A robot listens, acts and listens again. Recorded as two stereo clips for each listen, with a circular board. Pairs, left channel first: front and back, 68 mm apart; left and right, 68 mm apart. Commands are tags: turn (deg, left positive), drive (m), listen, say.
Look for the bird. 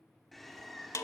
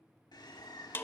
<turn deg="90"/>
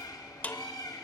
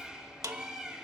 <turn deg="-10"/>
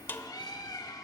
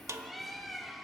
<say>Found it: a bird, straight ahead, 1 to 2 m away.</say>